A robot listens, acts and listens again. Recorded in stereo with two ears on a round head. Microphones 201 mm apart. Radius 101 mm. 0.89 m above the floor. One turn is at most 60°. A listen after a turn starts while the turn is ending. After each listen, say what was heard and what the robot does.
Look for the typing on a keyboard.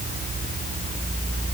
Keep listening.
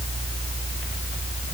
Keep listening.
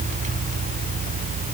I can't make out typing on a keyboard to turn to.